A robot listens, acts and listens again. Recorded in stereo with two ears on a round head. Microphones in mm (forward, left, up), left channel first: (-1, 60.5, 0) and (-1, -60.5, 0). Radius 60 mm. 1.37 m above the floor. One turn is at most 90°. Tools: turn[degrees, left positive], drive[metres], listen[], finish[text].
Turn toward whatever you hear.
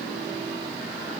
Action: listen[]
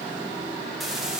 Action: turn[-30]
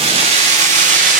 Thought: So it is at 115° right.
Action: turn[-90]
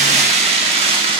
Thought: The keys jangling is now 40° right.
Action: turn[-40]
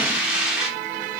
Action: finish[Facing the keys jangling, 2 to 4 m away.]